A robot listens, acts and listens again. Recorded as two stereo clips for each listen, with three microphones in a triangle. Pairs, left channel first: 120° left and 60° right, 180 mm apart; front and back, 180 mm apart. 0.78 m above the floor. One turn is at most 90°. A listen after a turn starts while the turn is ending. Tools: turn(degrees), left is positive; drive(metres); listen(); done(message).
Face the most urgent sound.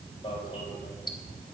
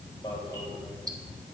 turn(degrees=65)
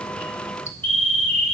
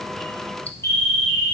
done("Facing the alarm.")